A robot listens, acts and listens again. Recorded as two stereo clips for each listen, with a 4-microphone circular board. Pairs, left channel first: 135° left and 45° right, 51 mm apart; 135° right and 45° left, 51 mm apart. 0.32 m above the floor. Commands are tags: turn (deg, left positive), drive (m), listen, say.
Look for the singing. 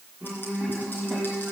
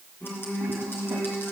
<turn deg="-130"/>
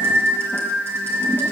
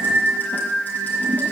<turn deg="-35"/>
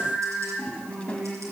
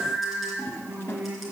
<say>Found it: singing, straight ahead, over 4 m away.</say>